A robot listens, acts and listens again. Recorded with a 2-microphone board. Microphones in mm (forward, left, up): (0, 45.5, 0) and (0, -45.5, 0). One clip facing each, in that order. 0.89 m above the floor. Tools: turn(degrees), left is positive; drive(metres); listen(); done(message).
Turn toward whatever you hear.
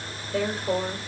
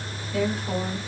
turn(degrees=30)
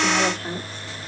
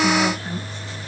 turn(degrees=130)
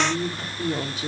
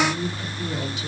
turn(degrees=45)
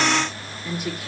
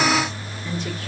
turn(degrees=10)
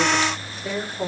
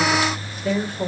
turn(degrees=15)
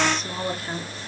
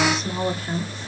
done("Facing the woman speaking, 1 to 2 m away.")